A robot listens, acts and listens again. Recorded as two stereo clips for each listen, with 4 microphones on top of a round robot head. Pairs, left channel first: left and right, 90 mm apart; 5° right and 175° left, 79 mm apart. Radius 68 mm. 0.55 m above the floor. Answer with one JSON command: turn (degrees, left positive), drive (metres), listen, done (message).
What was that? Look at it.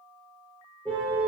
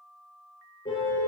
{"turn": 10}
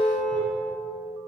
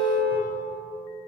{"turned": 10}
{"done": "Found it: a car horn, straight ahead, over 4 m away."}